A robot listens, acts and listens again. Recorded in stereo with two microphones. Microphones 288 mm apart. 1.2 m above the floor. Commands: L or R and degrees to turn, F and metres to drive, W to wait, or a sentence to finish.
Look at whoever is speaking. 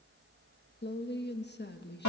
L35
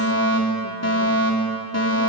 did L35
W
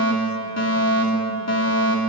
W
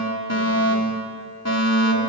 I heard a woman speaking, but can't make it out now. It was about straight ahead or 110° left.